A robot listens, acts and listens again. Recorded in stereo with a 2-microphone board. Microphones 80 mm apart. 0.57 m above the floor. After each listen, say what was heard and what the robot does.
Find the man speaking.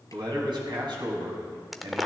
The man speaking: about 75° right or 105° right. Turn 75° right.
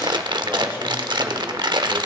Keep listening.
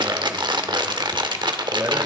Keep listening.
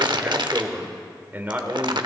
So it is at 25° right. Turn 25° right.
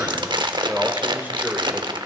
The man speaking is now 20° right. Turn 20° right.
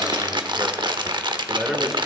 Facing the man speaking, 1 to 2 m away.